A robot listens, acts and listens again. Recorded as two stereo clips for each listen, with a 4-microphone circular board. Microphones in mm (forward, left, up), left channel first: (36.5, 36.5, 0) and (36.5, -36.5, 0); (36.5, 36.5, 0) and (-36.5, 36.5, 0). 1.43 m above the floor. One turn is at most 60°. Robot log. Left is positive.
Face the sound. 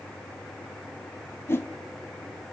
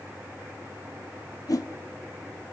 note: The whoosh: 35° left.
cmd yaw +35
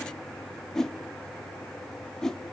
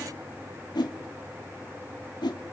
end: Found it: a whoosh, straight ahead, 2 to 4 m away.